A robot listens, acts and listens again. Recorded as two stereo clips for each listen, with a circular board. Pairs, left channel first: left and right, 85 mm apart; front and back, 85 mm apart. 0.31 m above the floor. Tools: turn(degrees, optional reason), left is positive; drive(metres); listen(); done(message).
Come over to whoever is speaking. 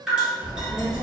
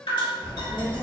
turn(degrees=-40, reason="The child speaking: 40° right.")
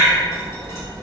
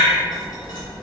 drive(metres=1.0)
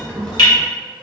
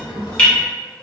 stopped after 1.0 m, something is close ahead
turn(degrees=15, reason="The child speaking is now 15° left.")
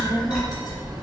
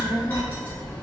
done("I am next to the child speaking.")